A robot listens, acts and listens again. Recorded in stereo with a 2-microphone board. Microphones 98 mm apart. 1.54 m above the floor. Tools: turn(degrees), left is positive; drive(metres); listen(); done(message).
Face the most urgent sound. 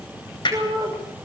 turn(degrees=-45)
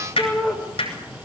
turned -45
done("Facing the shout, over 4 m away.")